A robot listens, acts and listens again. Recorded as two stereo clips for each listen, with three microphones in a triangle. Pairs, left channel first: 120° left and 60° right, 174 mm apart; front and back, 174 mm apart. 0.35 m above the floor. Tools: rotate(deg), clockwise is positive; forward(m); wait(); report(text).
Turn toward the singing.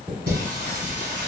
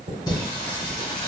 rotate(60)
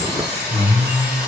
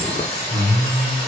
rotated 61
rotate(-25)
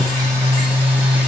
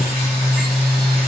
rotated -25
rotate(-25)
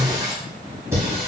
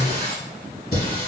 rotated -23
rotate(-20)
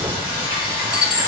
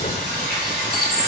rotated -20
report("Found it: singing, straight ahead.")